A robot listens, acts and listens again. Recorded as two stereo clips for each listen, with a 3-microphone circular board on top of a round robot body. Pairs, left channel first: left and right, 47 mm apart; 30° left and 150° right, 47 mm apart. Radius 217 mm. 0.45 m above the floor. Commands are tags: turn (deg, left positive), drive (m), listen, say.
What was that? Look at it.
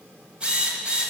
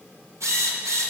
<turn deg="-160"/>
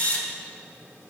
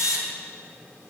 <turn deg="30"/>
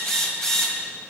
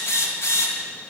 <turn deg="10"/>
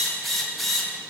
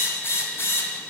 <say>Found it: a drill, straight ahead.</say>